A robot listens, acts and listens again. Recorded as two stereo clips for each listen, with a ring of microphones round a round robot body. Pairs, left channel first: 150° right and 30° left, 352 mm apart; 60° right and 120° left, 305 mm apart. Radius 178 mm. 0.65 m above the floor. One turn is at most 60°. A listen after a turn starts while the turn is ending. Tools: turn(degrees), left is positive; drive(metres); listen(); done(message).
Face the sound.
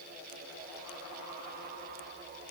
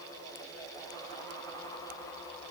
listen()
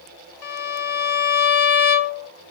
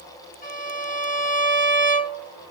turn(degrees=-60)
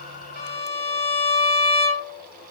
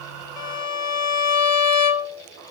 turn(degrees=-60)
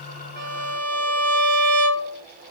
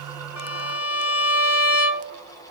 turn(degrees=-20)
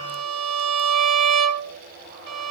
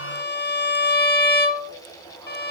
done("Facing the violin, 1 to 2 m away.")